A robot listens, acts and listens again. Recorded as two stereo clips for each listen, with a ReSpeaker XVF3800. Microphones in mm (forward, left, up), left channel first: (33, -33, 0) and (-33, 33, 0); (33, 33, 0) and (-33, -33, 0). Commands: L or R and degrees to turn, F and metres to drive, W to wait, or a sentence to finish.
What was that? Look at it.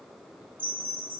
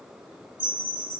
L160
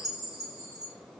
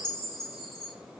Found it: a chime, straight ahead, under 1 m away.